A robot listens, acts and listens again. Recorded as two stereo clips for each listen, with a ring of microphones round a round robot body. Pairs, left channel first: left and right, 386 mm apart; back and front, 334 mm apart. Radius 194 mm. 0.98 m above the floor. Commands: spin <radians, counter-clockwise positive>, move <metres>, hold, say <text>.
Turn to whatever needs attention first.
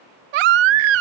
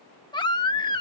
spin -1.75
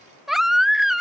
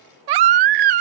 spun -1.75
say Facing the baby crying.